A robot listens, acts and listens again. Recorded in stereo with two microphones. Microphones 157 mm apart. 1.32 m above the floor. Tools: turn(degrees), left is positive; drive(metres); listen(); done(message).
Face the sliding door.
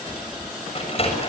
turn(degrees=40)
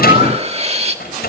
turn(degrees=100)
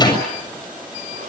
listen()
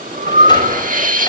listen()
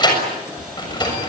turn(degrees=30)
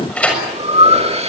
turn(degrees=10)
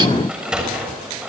done("Facing the sliding door, over 4 m away.")